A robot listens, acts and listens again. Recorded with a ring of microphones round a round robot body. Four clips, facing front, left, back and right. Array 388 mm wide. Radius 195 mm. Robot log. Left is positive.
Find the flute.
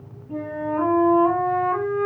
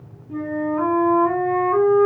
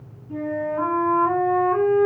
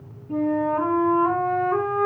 note: The flute: 50° right.
cmd yaw -50
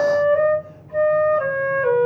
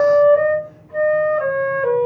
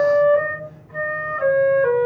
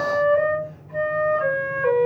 end: Found it: a flute, straight ahead.